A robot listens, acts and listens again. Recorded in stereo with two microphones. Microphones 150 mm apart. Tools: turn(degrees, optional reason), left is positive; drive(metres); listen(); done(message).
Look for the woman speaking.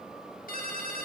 listen()
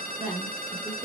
turn(degrees=-30)
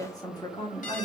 turn(degrees=30, reason="So it is at 30° left.")
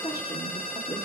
turn(degrees=30, reason="The woman speaking is now 30° left.")
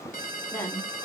turn(degrees=20, reason="The woman speaking is now 20° left.")
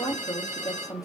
turn(degrees=25, reason="The woman speaking is now 25° left.")
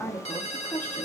turn(degrees=10, reason="The woman speaking is now 10° left.")
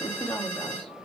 done("Facing the woman speaking.")